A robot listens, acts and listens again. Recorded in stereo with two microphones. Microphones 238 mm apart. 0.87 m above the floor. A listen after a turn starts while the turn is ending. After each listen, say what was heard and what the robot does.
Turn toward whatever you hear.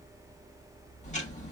The ticking: about 30° left or 150° left. Turn 30° left.
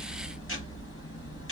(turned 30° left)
So it is at 120° left. Turn 120° left.
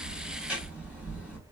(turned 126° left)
Facing the ticking, 1 to 2 m away.